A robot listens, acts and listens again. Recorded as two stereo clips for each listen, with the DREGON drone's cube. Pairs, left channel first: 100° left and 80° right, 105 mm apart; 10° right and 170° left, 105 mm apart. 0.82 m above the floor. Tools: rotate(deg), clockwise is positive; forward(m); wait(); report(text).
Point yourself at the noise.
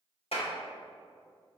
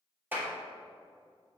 rotate(-100)
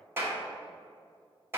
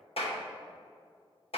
rotate(10)
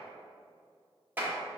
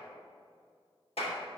report("Found it: a clap, straight ahead.")